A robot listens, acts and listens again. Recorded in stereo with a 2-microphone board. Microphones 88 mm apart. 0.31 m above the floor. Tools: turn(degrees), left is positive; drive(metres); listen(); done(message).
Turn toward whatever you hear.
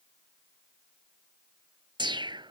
turn(degrees=-60)
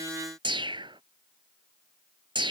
turn(degrees=-65)
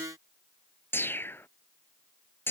turn(degrees=25)
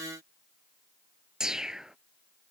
done("Facing the whoosh.")